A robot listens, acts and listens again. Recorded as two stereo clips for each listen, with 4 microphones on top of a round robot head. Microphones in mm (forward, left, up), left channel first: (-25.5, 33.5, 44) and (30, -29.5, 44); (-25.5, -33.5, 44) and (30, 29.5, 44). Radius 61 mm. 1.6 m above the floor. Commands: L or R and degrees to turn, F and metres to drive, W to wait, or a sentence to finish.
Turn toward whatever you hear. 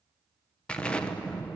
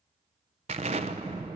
L55
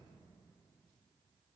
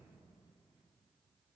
I heard an explosion from this way, but can't make it out now.